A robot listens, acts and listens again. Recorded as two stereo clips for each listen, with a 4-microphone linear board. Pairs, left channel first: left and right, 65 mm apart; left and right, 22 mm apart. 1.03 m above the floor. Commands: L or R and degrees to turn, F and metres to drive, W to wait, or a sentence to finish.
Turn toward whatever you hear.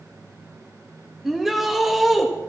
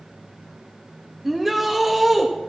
R30
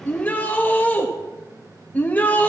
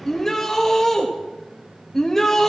L25
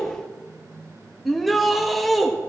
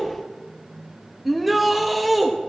Facing the shout.